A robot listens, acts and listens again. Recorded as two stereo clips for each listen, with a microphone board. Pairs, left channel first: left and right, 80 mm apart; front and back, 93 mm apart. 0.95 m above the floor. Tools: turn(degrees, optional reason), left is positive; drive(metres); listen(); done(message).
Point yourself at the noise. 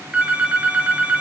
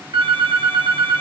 turn(degrees=-160, reason="The phone ringing: 160° right.")
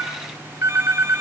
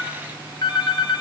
turn(degrees=-35, reason="The phone ringing is now 35° right.")
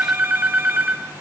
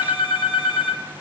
turn(degrees=-20, reason="The phone ringing is now 20° right.")
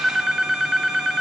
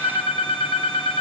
done("Found it: a phone ringing, straight ahead, 1 to 2 m away.")